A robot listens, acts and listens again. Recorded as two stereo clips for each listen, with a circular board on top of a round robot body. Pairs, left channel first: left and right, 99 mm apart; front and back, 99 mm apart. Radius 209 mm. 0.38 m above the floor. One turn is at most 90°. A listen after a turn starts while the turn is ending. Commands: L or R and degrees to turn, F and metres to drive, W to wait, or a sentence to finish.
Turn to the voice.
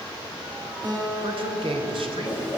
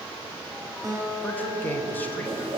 R70
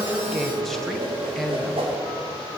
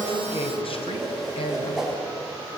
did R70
Facing the man speaking.